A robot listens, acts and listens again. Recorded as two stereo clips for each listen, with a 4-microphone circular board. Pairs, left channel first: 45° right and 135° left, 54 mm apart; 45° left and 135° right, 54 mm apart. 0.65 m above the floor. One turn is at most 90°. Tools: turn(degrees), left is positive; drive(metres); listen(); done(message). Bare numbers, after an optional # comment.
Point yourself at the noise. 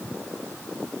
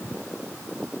listen()
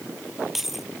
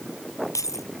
# The keys jangling: 50° left.
turn(50)
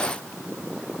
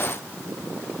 listen()
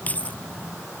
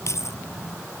# The keys jangling is now 15° left.
turn(15)
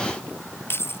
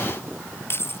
done("Found it: keys jangling, straight ahead.")